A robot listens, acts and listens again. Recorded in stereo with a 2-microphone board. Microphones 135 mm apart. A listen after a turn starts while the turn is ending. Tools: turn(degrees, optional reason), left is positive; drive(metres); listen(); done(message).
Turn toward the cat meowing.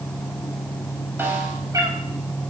turn(degrees=-25, reason="The cat meowing: about 25° right or 155° right.")
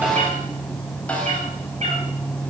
turn(degrees=-120, reason="So it is at 120° right.")
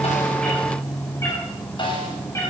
turn(degrees=20, reason="The cat meowing is now 20° left.")
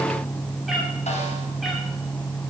listen()
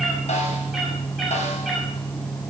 done("Found it: a cat meowing, straight ahead.")